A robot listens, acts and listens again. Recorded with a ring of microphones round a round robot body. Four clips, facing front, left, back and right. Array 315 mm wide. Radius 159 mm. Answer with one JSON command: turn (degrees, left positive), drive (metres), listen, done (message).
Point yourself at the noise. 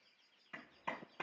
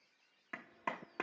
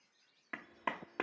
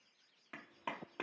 {"turn": 165}
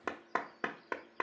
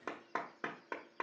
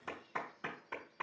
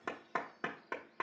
{"done": "Facing the clap."}